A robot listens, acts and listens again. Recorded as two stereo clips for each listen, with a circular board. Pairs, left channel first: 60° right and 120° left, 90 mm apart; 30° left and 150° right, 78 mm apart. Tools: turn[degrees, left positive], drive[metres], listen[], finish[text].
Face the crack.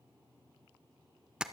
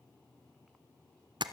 Action: listen[]
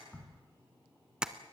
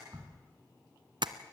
Thought: The crack: 130° right.
Action: turn[-130]
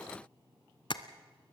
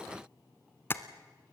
Action: finish[Facing where the crack came from. I can't hear it now.]